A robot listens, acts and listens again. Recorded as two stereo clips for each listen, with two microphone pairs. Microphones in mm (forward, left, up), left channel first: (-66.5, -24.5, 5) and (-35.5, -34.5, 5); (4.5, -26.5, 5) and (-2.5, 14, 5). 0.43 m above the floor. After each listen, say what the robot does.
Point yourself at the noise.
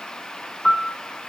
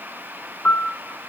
Turn 120° right.
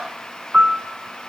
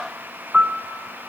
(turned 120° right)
Turn 35° left.
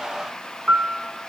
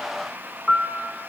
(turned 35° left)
Turn 10° left.
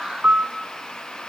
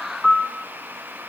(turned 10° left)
Found it: a piano, straight ahead.